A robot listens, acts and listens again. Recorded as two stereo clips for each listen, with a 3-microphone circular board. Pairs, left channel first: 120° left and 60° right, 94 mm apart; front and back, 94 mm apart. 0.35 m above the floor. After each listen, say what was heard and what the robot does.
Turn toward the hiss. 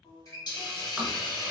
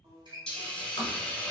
The hiss: 80° left. Turn 80° left.
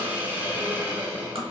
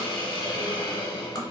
The hiss is now 10° left. Turn 10° left.
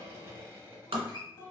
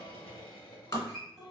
Keep listening.
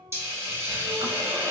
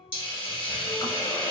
Facing the hiss.